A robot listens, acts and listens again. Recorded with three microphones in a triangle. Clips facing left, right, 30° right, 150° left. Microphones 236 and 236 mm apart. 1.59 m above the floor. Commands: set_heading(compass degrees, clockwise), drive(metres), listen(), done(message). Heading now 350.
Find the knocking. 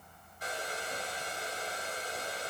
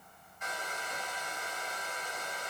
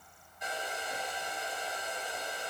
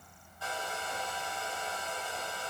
listen()
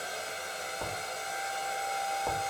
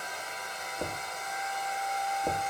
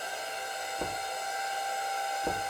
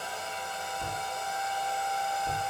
set_heading(20)
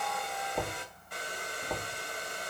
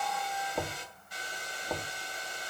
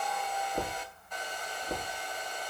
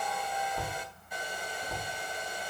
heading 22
done("Found it: knocking, straight ahead, 2 to 4 m away.")